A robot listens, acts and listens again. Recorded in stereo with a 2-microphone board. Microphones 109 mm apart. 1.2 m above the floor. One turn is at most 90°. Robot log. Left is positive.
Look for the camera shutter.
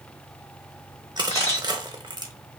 cmd yaw +90
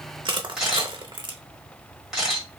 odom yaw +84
end: Facing the camera shutter, 1 to 2 m away.